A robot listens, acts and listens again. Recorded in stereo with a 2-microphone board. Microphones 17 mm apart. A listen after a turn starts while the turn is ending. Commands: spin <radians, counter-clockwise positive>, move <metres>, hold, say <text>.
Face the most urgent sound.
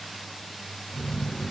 hold
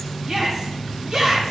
spin -0.79
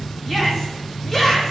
say Found it: a shout, straight ahead.